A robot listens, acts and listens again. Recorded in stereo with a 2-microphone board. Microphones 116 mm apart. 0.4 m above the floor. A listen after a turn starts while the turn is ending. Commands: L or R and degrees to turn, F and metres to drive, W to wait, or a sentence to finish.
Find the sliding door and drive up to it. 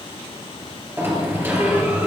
R20
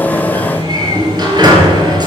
R140
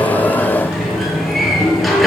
F1.0
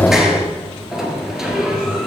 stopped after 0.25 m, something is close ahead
Blocked. The sliding door is further on, straight ahead.